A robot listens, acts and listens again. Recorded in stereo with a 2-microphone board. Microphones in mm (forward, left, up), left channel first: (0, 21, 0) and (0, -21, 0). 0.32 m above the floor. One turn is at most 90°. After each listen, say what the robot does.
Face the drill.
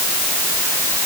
Keep listening.
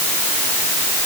Keep listening.
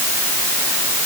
I can't make out a drill to turn to.